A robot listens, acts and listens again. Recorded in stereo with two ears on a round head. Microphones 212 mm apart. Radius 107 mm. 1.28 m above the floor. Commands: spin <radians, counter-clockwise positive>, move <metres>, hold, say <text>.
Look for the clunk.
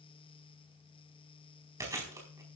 hold
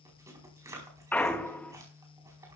spin 0.52
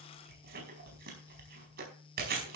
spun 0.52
hold
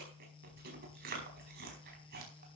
say I heard a clunk, but can't make it out now. It was about 20° right or 140° left.